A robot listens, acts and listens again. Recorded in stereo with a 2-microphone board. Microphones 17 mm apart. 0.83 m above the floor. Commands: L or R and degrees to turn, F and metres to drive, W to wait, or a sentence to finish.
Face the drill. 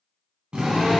R50
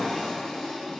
W
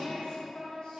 W
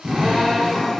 R80
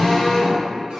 L35
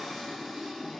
W
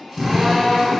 R15
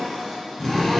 Found it: a drill, straight ahead, 1 to 2 m away.